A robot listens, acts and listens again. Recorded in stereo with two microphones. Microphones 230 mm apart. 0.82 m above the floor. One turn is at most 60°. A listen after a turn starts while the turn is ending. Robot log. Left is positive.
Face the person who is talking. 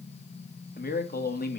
note: The man speaking: about 40° left or 140° left.
cmd yaw +40
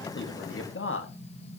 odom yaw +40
note: So it is at 90° left.
cmd yaw +60
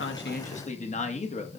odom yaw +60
note: The man speaking is now 35° left.
cmd yaw +35
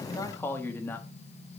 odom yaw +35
note: The man speaking is now 10° left.
cmd yaw +10
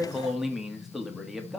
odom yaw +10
end: Found it: a man speaking, straight ahead, 1 to 2 m away.